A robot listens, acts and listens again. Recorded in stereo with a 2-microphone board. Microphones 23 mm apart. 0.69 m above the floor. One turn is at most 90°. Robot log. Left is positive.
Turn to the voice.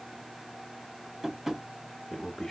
note: The man speaking: about 15° left or 165° left.
cmd yaw +15
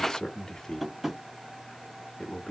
note: So it is at 150° left.
cmd yaw +90
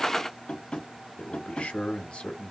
note: The man speaking is now 80° left.
cmd yaw +80
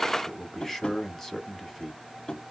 note: The man speaking is now 15° left.
cmd yaw +15
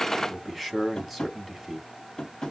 end: Facing the man speaking, 1 to 2 m away.